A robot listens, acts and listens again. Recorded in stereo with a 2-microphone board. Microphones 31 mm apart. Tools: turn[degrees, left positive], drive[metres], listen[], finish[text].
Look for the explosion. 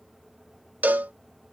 Action: listen[]
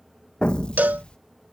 Thought: The explosion: about 35° left or 145° left.
Action: turn[35]
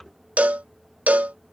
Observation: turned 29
Action: listen[]
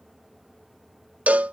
Action: finish[I heard an explosion, but can't make it out now. It was about 5° left or 115° left.]